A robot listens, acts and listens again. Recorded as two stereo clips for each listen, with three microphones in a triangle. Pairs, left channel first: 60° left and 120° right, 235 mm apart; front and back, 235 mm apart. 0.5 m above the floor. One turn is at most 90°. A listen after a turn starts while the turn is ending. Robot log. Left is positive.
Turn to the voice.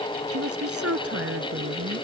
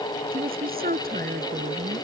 note: The woman speaking: 130° right.
cmd yaw -90
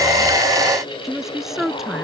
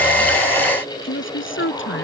note: The woman speaking is now 30° right.
cmd yaw -30
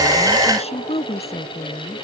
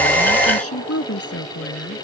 end: Found it: a woman speaking, straight ahead.